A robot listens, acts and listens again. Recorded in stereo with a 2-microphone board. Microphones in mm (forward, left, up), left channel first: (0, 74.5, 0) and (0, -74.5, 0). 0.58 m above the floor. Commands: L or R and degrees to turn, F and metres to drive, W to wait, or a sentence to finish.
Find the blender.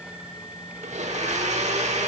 R50
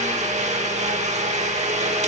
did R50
R65
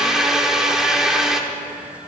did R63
Facing the blender.